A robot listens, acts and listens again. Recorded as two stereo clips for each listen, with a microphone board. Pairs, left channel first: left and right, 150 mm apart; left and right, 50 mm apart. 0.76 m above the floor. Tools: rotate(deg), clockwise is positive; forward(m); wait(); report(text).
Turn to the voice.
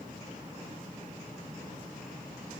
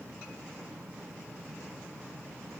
wait()
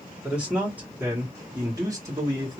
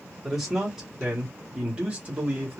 rotate(30)
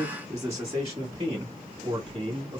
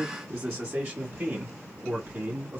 rotate(30)
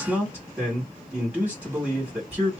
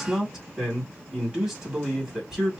report("Facing the man speaking, 1 to 2 m away.")